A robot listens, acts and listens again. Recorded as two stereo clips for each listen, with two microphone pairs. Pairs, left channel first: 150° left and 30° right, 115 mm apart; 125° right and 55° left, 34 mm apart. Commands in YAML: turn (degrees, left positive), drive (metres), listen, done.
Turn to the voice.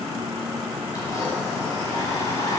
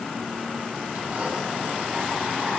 listen: true
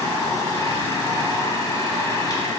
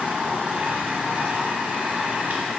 listen: true
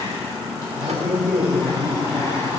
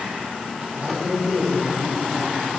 turn: 45
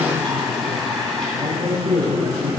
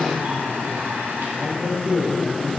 turn: 15
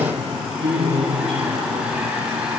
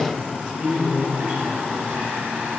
done: "Found it: a man speaking, straight ahead."